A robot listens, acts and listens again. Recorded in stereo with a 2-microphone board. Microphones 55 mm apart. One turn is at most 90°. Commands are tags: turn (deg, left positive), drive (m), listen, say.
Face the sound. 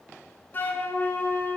<turn deg="35"/>
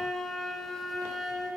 <say>Found it: a flute, straight ahead, under 1 m away.</say>